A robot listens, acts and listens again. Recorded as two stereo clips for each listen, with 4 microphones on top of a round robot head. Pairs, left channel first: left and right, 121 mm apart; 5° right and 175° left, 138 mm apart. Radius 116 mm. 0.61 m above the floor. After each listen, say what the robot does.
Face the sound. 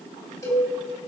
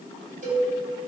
Turn 155° left.
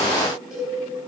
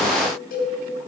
Found it: a cowbell, straight ahead.